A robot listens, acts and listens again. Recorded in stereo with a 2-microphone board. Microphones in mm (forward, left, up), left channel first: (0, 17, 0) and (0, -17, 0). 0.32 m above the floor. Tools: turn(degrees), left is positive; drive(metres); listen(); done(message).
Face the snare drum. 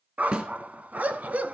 turn(degrees=-40)
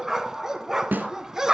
turn(degrees=-105)
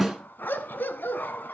done("Found it: a snare drum, straight ahead.")